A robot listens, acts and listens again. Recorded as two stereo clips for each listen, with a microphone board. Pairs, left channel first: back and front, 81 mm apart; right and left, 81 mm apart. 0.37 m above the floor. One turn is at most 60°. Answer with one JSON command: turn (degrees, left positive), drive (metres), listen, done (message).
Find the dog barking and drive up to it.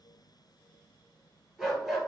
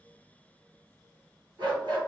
{"turn": 60}
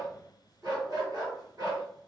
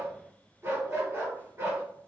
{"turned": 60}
{"turn": 30}
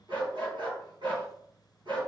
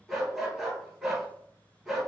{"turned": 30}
{"drive": 1.0}
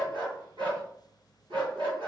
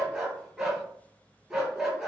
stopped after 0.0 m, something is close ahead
{"done": "Blocked. The dog barking is further on, straight ahead."}